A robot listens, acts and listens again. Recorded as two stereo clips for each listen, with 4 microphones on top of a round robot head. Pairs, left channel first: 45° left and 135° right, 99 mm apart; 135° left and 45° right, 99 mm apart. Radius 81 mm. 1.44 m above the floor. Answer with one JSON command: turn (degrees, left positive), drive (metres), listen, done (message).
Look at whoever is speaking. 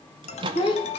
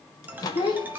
{"turn": 85}
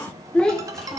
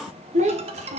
{"turn": -35}
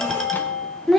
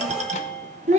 {"turn": -40}
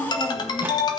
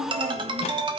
{"listen": true}
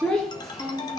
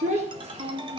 {"turn": -45}
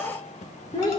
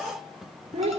{"done": "Facing the child speaking, 1 to 2 m away."}